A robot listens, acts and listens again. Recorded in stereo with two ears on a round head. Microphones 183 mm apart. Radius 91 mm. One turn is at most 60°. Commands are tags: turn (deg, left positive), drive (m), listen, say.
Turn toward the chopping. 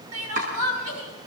<turn deg="-40"/>
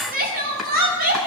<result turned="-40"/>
<say>Facing the chopping.</say>